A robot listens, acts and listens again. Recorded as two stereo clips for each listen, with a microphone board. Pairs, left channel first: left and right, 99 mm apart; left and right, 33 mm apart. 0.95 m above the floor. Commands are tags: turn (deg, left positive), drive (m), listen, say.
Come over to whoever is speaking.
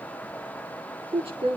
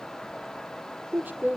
<turn deg="-90"/>
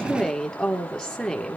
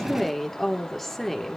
<drive m="1.0"/>
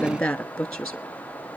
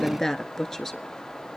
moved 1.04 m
<drive m="1.0"/>
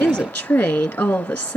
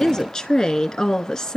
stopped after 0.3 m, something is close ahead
<turn deg="15"/>
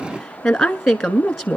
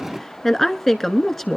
<say>Arrived at the woman speaking, straight ahead.</say>